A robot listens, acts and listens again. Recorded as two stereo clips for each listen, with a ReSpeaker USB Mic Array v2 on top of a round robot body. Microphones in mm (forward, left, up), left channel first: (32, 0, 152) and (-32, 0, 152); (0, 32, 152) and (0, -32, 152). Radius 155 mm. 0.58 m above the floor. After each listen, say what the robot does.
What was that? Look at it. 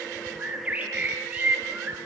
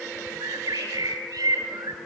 Turn 110° right.
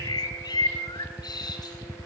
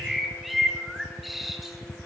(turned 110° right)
Found it: a bird, straight ahead, over 4 m away.